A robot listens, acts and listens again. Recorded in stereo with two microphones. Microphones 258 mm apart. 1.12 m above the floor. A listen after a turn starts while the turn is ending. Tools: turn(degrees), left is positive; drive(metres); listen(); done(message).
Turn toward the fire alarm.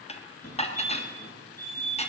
turn(degrees=70)
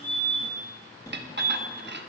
turn(degrees=15)
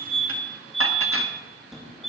done("Facing the fire alarm, 2 to 4 m away.")